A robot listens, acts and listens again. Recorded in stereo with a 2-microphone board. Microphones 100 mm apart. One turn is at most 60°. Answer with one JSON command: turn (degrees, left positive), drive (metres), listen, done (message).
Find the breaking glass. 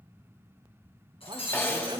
{"turn": 60}
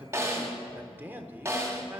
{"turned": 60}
{"listen": true}
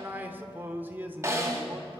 {"done": "I heard breaking glass, but can't make it out now. It was about 10° left or 50° left."}